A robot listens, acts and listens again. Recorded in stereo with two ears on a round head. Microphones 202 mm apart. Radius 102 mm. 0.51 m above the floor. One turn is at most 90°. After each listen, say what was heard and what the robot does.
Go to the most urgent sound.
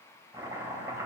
Keep listening.
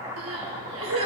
The crying: about 75° right or 105° right. Turn 75° right.
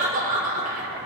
So it is at 35° right. Turn 35° right.
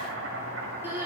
The crying is now 10° right. Turn 10° right.
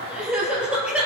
Drive 1.0 m forward.
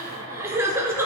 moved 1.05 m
The crying is now 10° right. Turn 10° right.
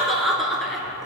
Drive 1.0 m forward.
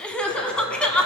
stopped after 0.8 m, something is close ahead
I am next to the crying.